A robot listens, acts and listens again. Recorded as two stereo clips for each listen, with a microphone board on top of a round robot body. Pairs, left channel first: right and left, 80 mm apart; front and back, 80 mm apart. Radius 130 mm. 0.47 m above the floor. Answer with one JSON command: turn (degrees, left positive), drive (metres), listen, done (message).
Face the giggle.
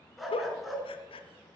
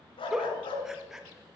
{"turn": -95}
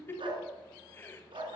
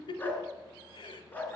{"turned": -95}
{"turn": -25}
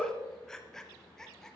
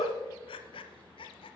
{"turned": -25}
{"done": "Facing the giggle, under 1 m away."}